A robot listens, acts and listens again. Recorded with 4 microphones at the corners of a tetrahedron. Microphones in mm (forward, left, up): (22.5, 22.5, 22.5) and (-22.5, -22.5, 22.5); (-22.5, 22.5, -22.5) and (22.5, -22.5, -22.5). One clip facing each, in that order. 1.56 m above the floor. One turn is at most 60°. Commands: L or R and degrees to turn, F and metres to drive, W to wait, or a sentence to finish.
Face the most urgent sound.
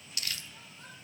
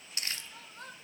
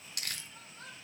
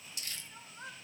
R60
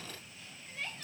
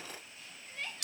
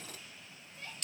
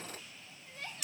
R45
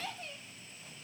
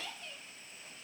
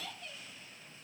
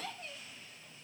Found it: crying, straight ahead.